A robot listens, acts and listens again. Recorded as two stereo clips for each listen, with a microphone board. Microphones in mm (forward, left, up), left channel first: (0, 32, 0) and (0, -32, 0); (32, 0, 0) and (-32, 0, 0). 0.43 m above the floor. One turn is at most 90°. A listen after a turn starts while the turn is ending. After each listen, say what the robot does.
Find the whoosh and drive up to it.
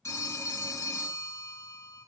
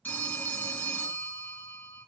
Keep listening.
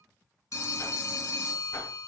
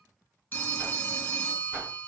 Turn 90° left.
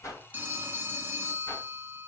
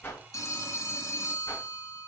Turn 35° left.
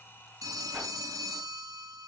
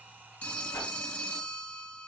Drive 1.0 m forward.
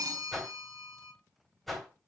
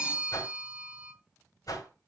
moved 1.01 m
Drive 1.0 m forward.
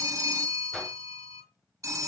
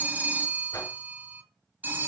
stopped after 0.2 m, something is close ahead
Arrived at the whoosh, straight ahead.